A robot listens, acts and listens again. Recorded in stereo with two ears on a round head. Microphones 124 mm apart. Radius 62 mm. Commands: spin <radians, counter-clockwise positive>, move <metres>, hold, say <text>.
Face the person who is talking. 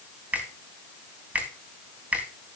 hold
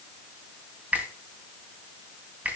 hold
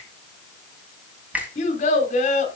spin 0.96
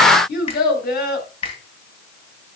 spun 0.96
spin 1.22
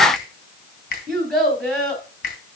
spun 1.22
say Found it: a child speaking, straight ahead, 1 to 2 m away.